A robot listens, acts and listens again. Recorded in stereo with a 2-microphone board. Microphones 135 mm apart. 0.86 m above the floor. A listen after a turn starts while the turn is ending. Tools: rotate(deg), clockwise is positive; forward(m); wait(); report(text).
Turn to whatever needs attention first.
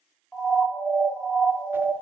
rotate(-30)
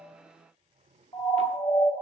rotate(-135)
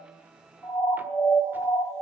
rotate(-20)
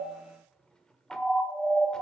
report("Found it: a siren, straight ahead, 2 to 4 m away.")